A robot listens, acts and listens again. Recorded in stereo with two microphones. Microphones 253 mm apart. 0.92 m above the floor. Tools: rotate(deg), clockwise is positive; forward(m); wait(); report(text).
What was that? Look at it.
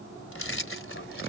rotate(-50)
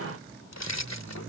rotate(-85)
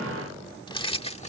rotate(-25)
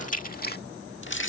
rotate(-50)
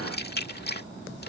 rotate(-40)
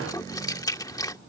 rotate(-15)
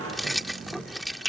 report("Found it: keys jangling, straight ahead.")